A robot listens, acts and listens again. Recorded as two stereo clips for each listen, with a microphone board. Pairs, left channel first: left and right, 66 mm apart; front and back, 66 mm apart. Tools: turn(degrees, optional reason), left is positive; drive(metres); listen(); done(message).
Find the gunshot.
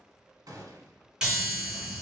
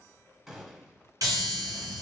turn(degrees=-95, reason="The gunshot: 95° right.")
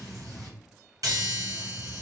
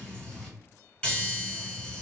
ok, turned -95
done("Facing where the gunshot came from. I can't hear it now.")